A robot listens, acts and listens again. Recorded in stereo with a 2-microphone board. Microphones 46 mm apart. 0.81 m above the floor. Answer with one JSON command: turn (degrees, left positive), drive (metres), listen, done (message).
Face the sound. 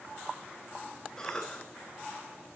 {"turn": 30}
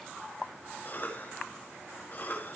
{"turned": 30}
{"turn": 135}
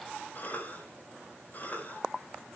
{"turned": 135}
{"turn": 40}
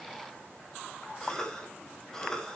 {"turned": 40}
{"turn": 15}
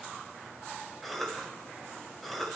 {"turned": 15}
{"done": "Facing the cough, over 4 m away."}